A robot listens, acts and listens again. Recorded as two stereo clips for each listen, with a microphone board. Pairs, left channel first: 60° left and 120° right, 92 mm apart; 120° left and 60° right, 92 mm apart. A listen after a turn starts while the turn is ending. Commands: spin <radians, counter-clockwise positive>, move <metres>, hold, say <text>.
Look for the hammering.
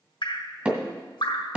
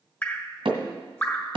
spin -0.87
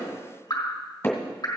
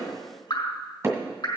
say Facing the hammering.